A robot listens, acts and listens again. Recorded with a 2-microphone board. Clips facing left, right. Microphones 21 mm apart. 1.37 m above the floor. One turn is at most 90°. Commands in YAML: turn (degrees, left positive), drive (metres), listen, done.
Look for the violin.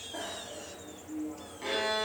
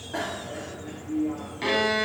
turn: -60
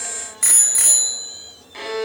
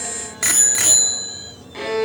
done: "Found it: a violin, straight ahead."